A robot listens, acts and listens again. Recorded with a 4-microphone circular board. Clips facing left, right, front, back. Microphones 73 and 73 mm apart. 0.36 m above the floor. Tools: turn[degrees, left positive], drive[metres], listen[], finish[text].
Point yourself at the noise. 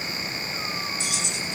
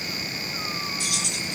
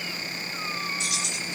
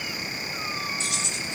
Thought: The keys jangling: 120° right.
Action: turn[-120]
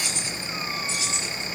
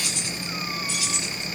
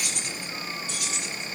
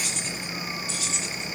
Thought: The keys jangling is now 25° left.
Action: turn[25]
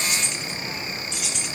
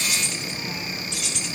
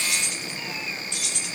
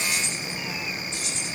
Action: finish[Found it: keys jangling, straight ahead, over 4 m away.]